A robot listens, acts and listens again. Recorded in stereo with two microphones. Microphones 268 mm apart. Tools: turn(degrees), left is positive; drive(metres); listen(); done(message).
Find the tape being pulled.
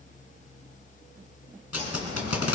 turn(degrees=65)
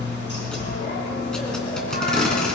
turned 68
done("Facing the tape being pulled, 2 to 4 m away.")